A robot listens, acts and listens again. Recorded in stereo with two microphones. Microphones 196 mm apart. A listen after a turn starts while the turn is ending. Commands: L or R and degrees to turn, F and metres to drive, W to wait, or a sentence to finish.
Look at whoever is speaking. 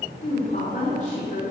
L40
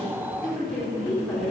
Facing the woman speaking, 2 to 4 m away.